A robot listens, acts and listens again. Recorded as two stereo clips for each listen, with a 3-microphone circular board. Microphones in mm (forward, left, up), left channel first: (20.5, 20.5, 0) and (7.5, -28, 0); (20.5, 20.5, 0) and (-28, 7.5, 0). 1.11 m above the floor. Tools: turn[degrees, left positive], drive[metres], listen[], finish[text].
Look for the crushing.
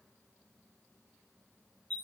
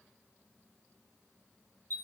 Action: listen[]
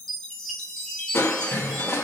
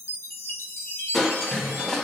Thought: The crushing: 95° left.
Action: turn[95]
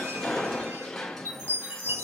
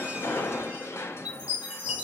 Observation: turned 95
Thought: The crushing is now 10° right.
Action: turn[-10]
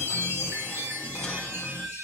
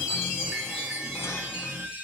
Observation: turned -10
Action: listen[]
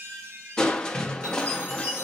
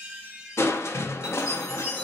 Action: finish[Facing the crushing.]